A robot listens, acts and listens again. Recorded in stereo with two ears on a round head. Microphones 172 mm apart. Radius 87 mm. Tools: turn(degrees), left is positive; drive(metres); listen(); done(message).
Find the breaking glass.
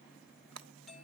turn(degrees=-70)
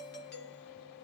listen()
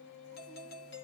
done("I heard breaking glass, but can't make it out now. It was about straight ahead or 40° right.")